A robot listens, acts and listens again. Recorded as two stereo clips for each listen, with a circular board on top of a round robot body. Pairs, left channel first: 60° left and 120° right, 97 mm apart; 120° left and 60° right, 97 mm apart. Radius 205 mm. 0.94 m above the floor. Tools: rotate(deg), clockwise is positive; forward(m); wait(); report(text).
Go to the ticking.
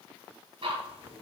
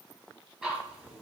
rotate(135)
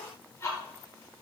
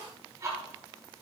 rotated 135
forward(1.0)
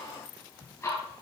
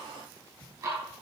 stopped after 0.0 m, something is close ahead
report("Something is in my way. I am facing the ticking but have not reached it.")